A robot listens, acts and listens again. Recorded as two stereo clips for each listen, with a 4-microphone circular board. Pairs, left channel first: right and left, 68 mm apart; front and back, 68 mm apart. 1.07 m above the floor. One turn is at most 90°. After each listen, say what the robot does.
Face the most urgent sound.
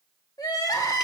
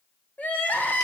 Turn 65° right.
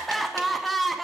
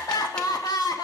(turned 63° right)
Found it: crying, straight ahead.